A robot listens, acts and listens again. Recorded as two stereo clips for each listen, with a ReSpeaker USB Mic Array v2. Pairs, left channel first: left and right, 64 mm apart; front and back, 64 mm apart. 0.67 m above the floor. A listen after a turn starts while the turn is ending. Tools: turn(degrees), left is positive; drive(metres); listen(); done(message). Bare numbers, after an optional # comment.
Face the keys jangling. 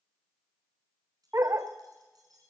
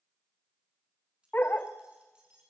# The keys jangling: 105° right.
turn(-105)
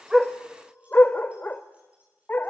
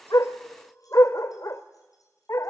listen()
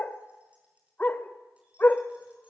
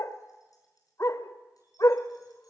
# The keys jangling is now 20° right.
turn(-20)
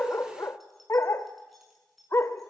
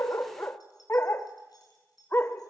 done("Found it: keys jangling, straight ahead, over 4 m away.")